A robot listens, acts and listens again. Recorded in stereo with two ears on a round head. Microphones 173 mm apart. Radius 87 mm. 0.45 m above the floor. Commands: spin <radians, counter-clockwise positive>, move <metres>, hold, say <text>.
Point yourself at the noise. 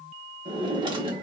spin -0.44
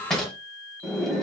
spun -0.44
say Found it: a drawer, straight ahead, 1 to 2 m away.